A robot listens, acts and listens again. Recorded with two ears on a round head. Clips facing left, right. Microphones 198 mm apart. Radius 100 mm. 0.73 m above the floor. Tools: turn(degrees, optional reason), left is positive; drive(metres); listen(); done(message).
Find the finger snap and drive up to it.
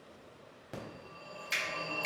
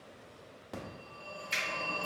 turn(degrees=90)
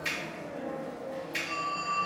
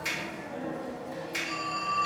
turn(degrees=-20, reason="So it is at 20° right.")
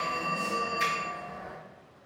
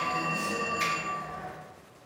listen()
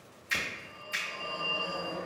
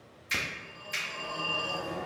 drive(metres=1.0)
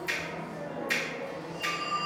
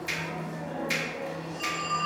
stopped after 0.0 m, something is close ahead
done("Blocked. The finger snap is further on, straight ahead.")